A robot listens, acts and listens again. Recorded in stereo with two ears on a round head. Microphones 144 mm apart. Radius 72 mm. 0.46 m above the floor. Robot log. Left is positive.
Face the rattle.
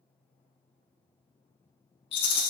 note: The rattle: about 35° left or 145° left.
cmd yaw +35
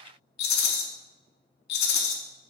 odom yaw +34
note: So it is at 105° left.
cmd yaw +105
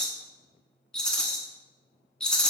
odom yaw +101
end: Found it: a rattle, straight ahead, under 1 m away.